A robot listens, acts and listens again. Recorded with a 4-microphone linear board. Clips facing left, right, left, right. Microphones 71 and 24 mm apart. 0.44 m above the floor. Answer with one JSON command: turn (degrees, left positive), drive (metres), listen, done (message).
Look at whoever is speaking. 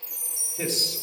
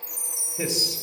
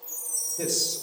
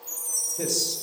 {"turn": -30}
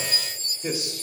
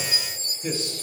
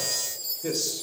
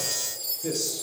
{"turn": 20}
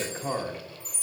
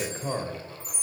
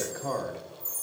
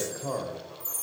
{"done": "Found it: a man speaking, straight ahead, 1 to 2 m away."}